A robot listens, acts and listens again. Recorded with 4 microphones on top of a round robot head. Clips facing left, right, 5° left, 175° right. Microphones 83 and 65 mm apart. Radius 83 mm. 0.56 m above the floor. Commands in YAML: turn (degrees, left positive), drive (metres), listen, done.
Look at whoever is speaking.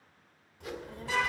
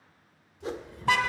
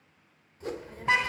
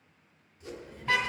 turn: 55
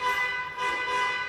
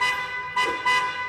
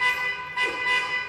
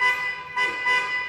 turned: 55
listen: true
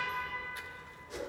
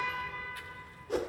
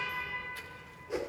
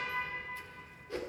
turn: 25
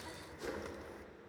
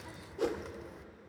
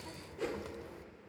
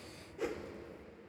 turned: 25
done: "Facing the child speaking."